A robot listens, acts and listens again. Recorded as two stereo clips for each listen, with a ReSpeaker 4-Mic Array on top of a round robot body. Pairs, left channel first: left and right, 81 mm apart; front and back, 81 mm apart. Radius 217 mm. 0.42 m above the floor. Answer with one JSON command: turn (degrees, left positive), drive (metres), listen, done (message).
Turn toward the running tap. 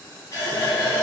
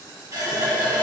{"turn": 130}
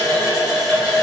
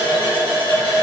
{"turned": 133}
{"done": "Facing the running tap, 1 to 2 m away."}